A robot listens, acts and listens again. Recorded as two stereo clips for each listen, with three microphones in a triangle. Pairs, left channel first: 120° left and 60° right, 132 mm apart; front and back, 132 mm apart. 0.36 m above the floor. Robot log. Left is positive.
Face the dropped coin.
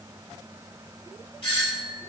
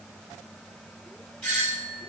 cmd idle
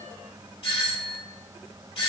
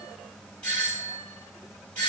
cmd idle
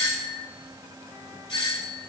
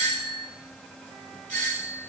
end: I can't make out a dropped coin, only a doorbell.